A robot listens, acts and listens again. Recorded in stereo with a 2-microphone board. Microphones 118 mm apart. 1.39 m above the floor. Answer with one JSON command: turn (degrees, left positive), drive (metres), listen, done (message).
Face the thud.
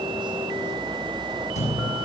{"turn": 90}
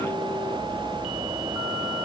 {"done": "Facing where the thud came from. I can't hear it now."}